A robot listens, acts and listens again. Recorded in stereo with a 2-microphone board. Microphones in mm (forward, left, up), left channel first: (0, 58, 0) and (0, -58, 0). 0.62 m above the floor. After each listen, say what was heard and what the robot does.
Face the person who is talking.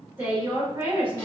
The woman speaking: about 15° right or 165° right. Turn 15° right.
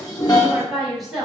Facing the woman speaking.